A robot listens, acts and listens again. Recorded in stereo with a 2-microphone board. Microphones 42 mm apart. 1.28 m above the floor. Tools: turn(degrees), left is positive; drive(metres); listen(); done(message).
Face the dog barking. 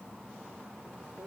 listen()
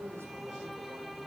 listen()
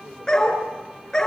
turn(degrees=15)
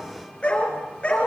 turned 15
turn(degrees=30)
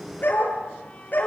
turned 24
turn(degrees=130)
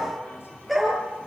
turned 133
done("Facing the dog barking.")